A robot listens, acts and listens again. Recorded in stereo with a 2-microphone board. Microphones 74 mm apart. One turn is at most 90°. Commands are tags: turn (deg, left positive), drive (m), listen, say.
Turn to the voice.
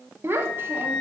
<turn deg="-30"/>
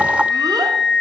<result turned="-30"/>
<listen/>
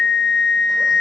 <listen/>
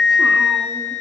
<say>I heard a child speaking, but can't make it out now. It was about straight ahead or 120° right.</say>